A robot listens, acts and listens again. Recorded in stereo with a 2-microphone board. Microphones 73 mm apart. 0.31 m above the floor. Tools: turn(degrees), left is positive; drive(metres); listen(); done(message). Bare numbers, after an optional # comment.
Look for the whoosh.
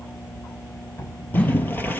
# The whoosh: about 20° left or 160° left.
turn(20)
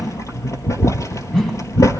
done("Facing the whoosh.")